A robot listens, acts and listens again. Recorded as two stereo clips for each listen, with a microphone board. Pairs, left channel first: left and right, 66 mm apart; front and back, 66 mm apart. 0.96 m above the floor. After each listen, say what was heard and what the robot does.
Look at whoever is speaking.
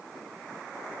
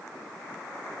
Keep listening.
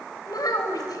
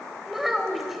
The child speaking: 95° left. Turn 95° left.
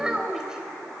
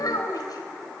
The child speaking is now 10° right. Turn 10° right.
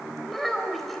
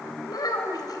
Facing the child speaking, 2 to 4 m away.